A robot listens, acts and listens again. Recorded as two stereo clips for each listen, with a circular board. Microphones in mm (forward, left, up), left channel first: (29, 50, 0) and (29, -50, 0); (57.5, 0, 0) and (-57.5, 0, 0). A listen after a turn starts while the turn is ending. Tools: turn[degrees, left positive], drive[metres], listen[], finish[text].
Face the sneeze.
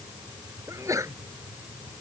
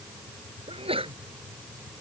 Thought: The sneeze: 145° right.
Action: turn[-145]
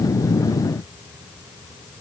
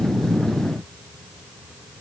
Action: finish[I heard a sneeze from this way, but can't make it out now.]